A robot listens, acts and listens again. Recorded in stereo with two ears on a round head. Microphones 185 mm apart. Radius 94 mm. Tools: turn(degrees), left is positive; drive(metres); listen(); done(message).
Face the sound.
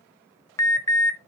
turn(degrees=15)
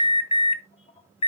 turn(degrees=150)
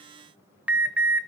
done("Facing the alarm, 1 to 2 m away.")